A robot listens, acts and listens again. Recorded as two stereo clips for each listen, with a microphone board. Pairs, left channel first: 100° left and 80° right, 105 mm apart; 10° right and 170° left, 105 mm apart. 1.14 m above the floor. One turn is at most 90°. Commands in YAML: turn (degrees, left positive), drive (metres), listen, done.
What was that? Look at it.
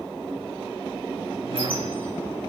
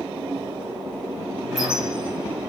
turn: -90
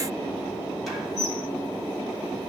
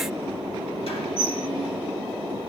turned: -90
turn: 10
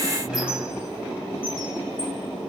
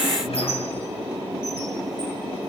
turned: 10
done: "Found it: a squeak, straight ahead."